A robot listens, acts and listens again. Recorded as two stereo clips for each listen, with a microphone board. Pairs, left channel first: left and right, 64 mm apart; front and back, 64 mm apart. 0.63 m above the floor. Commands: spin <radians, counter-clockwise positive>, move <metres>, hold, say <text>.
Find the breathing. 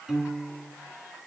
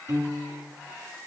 hold
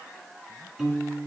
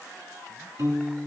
hold
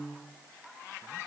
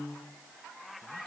say I can't make out breathing, only a piano.